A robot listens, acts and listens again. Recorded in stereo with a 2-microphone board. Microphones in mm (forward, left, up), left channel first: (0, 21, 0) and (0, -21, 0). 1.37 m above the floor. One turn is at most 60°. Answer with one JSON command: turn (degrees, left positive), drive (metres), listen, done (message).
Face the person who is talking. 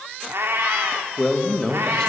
{"turn": 30}
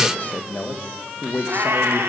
{"turn": 60}
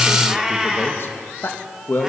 {"turn": 60}
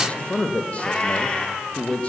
{"turn": 35}
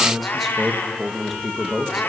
{"done": "Found it: a man speaking, straight ahead."}